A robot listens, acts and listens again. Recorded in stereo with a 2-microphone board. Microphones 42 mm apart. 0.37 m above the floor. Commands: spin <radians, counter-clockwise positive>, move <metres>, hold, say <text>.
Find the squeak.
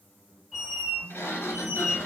spin -0.26
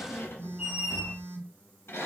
spin -2.53
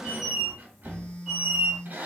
spin -0.35
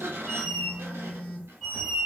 say Facing the squeak, 1 to 2 m away.